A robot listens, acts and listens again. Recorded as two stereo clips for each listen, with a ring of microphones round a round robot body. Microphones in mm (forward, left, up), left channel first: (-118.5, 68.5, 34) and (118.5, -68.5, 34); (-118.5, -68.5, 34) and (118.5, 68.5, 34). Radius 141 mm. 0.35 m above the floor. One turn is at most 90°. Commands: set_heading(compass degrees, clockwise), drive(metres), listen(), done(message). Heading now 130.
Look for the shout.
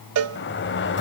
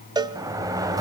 listen()
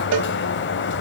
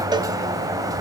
listen()
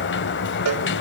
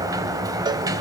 done("I can't make out a shout to turn to.")